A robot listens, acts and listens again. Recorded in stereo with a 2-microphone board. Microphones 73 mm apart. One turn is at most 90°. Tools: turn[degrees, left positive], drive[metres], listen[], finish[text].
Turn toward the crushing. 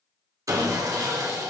Action: listen[]
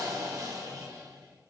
Action: listen[]
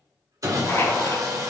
Thought: The crushing: about 40° left or 140° left.
Action: turn[40]
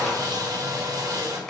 Action: finish[Facing the crushing, 1 to 2 m away.]